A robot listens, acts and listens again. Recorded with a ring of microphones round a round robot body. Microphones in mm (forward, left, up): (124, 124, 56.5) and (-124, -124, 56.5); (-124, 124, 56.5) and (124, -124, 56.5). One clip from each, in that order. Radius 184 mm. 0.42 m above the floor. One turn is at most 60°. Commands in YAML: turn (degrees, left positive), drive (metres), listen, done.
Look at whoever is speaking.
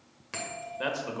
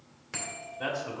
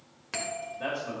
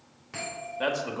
turn: -10
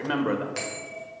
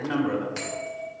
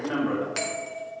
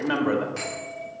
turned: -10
done: "Facing the man speaking."